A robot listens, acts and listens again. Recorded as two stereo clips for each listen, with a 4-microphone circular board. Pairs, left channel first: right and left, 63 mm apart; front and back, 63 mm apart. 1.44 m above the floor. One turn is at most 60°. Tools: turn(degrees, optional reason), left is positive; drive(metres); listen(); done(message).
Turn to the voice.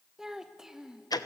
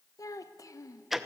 turn(degrees=10, reason="The child speaking: 10° left.")
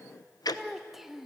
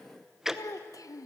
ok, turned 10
done("Found it: a child speaking, straight ahead.")